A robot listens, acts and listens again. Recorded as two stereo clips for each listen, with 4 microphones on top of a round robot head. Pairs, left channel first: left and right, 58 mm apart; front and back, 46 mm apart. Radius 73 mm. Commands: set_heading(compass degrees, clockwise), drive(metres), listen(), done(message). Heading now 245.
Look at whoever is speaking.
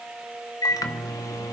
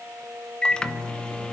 listen()
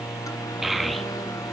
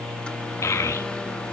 done("Facing the child speaking.")